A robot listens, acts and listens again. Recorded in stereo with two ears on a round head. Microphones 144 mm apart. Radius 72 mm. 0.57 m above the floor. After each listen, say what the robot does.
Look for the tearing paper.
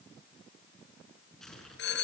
Turn 30° left.
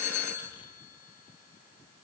Keep listening.
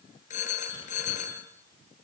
Keep listening.
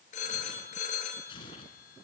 Turn 150° left.
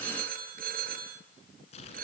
Turn 40° left.
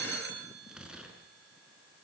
Facing the tearing paper.